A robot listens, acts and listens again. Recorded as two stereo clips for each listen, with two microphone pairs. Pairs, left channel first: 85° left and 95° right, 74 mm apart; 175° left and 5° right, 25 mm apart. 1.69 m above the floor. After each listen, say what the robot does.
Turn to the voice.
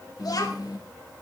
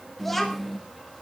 Turn 95° left.
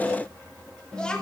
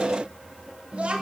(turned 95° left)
Facing the child speaking, 1 to 2 m away.